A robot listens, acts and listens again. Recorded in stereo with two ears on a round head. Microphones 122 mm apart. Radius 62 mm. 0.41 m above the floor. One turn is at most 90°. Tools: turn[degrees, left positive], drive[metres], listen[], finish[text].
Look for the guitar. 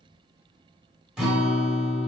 Action: turn[-30]
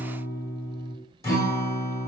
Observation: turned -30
Thought: So it is at 25° left.
Action: turn[25]
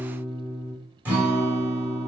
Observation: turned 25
Thought: The guitar is now 15° right.
Action: turn[-15]
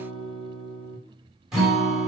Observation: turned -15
Action: finish[Facing the guitar, under 1 m away.]